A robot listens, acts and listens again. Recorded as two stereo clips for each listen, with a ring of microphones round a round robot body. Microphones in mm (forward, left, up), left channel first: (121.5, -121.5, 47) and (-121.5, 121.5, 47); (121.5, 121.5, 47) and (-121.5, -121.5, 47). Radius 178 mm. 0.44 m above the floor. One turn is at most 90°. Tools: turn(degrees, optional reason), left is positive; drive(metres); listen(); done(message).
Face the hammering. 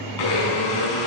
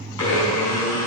listen()
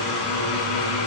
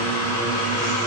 listen()
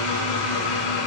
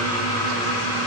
done("I can't make out hammering to turn to.")